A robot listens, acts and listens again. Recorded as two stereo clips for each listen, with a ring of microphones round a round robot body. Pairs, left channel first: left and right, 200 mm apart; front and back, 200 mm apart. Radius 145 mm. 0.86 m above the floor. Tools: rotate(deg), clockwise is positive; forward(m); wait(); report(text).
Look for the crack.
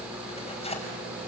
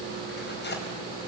wait()
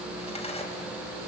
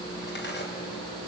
wait()
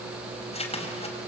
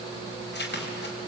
report("I can't make out a crack, only tearing paper.")